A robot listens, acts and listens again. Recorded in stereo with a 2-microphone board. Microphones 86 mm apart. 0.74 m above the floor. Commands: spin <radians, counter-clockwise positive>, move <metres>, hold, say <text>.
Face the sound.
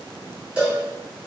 spin -0.52
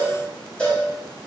spin 0.26
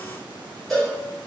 say Found it: a cowbell, straight ahead.